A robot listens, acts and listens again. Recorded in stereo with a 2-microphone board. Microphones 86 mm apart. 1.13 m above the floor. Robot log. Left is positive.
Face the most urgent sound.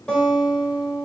cmd idle
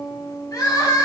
note: The crying: about 45° left or 135° left.
cmd yaw +45
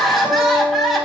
end: Found it: crying, straight ahead.